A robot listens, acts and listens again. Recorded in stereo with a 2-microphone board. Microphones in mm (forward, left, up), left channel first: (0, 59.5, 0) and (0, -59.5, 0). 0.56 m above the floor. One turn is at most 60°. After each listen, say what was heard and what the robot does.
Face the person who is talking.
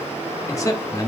The man speaking: about 25° left or 155° left. Turn 25° left.
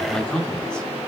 So it is at 10° left. Turn 10° left.
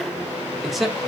Facing the man speaking.